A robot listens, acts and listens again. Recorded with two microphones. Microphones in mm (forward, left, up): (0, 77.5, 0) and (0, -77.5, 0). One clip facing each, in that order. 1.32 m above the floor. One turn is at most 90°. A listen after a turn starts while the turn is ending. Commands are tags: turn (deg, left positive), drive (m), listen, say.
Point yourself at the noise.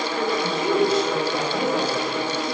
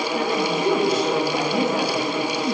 <turn deg="-45"/>
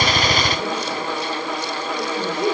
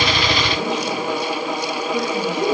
<turn deg="-85"/>
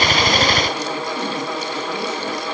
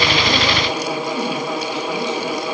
<listen/>
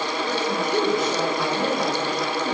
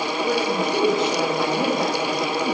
<turn deg="-25"/>
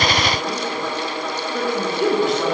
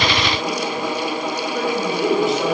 <say>Facing the woman speaking, 2 to 4 m away.</say>